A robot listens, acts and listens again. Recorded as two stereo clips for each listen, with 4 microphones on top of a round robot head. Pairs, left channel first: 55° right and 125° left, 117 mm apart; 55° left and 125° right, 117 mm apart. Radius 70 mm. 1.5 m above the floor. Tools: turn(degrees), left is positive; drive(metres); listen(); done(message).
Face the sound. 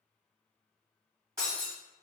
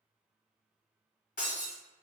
turn(degrees=60)
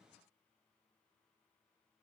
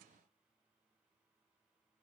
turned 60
done("Facing where the breaking glass came from. I can't hear it now.")